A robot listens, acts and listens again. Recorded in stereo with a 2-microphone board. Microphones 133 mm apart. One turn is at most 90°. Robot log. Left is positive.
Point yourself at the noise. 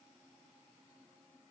cmd idle
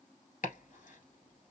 cmd yaw +90
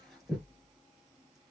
end: Found it: chopping, straight ahead, 1 to 2 m away.